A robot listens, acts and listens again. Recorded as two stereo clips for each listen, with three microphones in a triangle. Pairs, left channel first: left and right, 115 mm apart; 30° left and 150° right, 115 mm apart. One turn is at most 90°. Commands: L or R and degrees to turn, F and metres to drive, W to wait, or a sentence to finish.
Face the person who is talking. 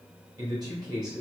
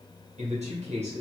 R90
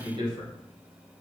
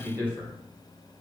R45
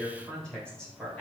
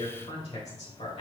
Facing the man speaking.